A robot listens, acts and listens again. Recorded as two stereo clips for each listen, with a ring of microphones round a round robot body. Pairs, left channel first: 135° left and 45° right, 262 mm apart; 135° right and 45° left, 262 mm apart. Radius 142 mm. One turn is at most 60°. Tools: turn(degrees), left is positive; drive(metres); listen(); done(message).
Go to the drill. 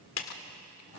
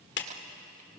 listen()
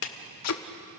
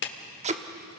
listen()
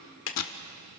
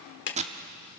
done("I can't make out a drill, only tape being pulled and a clap.")